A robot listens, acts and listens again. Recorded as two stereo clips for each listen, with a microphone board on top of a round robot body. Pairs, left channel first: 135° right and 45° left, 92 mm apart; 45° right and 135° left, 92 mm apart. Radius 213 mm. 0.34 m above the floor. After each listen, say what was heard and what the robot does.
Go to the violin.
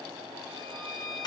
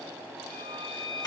The violin: 45° right. Turn 45° right.
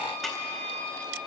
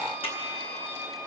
Drive 1.0 m forward.
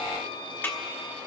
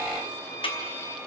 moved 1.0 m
The violin is now 15° left. Turn 15° left.
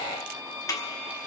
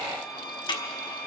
Drive 1.0 m forward.
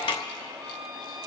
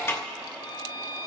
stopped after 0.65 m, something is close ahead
The violin is now 10° right. Turn 10° right.
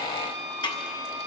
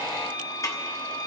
Arrived at the violin, straight ahead.